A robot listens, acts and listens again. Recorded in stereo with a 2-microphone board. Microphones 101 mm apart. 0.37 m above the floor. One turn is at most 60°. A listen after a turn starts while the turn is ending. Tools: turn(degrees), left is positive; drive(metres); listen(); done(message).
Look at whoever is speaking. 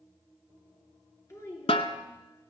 turn(degrees=25)
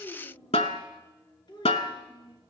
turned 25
turn(degrees=60)
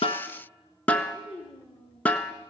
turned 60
turn(degrees=60)
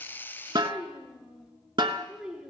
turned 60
done("Found it: a child speaking, straight ahead, 2 to 4 m away.")